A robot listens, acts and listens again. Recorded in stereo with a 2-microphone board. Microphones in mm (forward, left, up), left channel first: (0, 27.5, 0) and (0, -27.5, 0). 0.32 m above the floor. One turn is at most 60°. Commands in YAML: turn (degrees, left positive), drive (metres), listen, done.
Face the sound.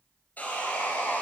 turn: 30
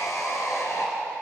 turn: 60
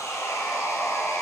turn: 60
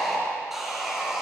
done: "Facing the sawing, over 4 m away."